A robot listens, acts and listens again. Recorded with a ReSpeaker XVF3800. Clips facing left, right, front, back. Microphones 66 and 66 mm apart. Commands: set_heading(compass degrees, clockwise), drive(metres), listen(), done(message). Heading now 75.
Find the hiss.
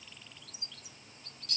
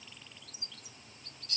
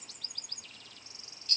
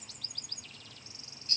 listen()
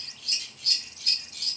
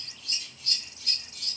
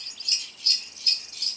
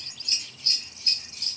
listen()
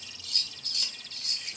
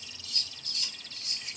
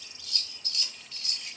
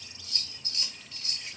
done("I can't make out a hiss, only scissors.")